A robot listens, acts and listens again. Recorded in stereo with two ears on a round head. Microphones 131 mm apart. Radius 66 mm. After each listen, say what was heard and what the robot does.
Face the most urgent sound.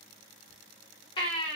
The baby crying: about 35° left or 145° left. Turn 35° left.
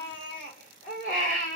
So it is at 110° left. Turn 110° left.
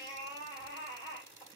The baby crying is now 30° left. Turn 30° left.
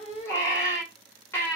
The baby crying is now 15° left. Turn 15° left.
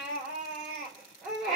Found it: a baby crying, straight ahead.